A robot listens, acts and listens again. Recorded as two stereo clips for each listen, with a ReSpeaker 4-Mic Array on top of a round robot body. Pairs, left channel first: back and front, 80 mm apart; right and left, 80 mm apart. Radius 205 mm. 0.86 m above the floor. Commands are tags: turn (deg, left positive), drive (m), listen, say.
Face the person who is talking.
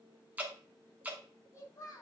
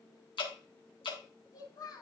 <turn deg="-130"/>
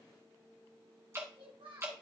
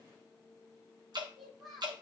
<say>Found it: a child speaking, straight ahead.</say>